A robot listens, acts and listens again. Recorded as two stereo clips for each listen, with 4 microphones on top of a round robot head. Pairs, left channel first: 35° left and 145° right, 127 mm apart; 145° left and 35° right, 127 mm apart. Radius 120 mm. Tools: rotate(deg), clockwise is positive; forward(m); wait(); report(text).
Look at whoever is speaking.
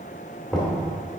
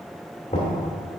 wait()
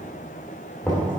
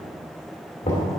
wait()
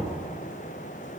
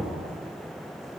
report("I can't make out anyone speaking to turn to.")